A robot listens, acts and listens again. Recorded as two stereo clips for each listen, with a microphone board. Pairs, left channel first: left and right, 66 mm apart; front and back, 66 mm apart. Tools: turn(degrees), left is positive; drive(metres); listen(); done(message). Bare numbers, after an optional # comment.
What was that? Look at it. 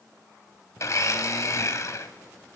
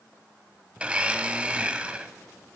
# The blender: 110° left.
turn(110)
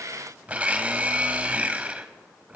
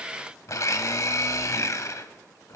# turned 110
# The blender is now 25° right.
turn(-25)
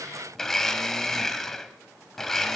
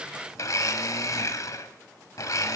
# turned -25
done("Found it: a blender, straight ahead, 1 to 2 m away.")